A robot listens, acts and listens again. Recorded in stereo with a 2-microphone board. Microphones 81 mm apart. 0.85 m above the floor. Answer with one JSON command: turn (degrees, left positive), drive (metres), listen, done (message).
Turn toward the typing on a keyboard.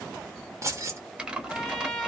{"turn": -30}
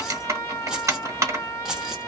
{"turn": -135}
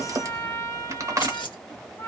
{"turn": -45}
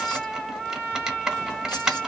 {"done": "Facing the typing on a keyboard."}